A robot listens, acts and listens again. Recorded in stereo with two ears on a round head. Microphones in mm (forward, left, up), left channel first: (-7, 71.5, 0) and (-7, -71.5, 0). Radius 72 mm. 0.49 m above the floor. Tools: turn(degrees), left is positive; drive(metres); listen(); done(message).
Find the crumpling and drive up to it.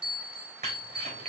turn(degrees=-45)
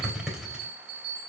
drive(metres=1.0)
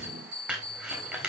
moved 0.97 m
turn(degrees=-10)
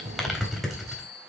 drive(metres=1.0)
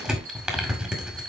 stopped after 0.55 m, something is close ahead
turn(degrees=-10)
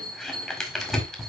done("I am next to the crumpling.")